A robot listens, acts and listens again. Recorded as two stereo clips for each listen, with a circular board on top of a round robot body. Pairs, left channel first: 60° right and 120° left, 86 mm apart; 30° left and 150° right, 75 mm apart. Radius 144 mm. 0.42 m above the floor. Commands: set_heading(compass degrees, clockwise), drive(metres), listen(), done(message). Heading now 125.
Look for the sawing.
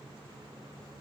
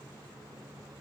listen()
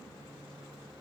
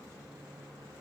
listen()
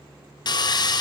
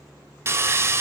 set_heading(220)
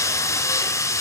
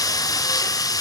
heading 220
done("Found it: sawing, straight ahead, under 1 m away.")